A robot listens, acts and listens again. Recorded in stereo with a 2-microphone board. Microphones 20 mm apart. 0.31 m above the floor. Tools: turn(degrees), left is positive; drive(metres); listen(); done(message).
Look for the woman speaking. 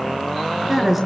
turn(degrees=-30)
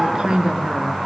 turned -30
turn(degrees=-140)
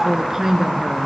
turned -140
turn(degrees=-15)
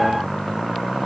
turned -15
listen()
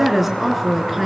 done("Found it: a woman speaking, straight ahead, over 4 m away.")